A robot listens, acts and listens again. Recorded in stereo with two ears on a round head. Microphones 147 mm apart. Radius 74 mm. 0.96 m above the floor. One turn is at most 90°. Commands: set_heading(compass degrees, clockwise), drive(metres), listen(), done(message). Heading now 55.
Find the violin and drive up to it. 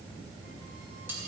listen()
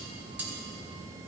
listen()
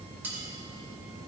done("I can't make out a violin, only cutlery clinking.")